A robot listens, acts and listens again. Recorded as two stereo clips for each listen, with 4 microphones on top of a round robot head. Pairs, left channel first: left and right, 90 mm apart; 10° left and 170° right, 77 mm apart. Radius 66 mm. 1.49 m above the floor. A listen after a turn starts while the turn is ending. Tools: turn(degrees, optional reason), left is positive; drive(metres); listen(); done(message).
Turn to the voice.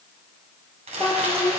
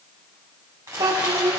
turn(degrees=165, reason="The child speaking: 165° left.")
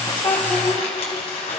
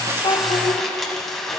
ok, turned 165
listen()
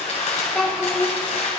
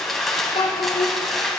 done("Facing the child speaking.")